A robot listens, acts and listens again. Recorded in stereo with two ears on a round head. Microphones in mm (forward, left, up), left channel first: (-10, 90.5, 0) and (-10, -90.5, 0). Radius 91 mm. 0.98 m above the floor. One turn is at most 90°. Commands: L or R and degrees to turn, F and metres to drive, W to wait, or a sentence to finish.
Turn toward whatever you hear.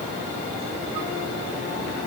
W
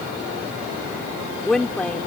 L30
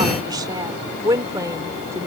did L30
R15
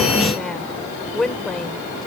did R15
Found it: a woman speaking, straight ahead.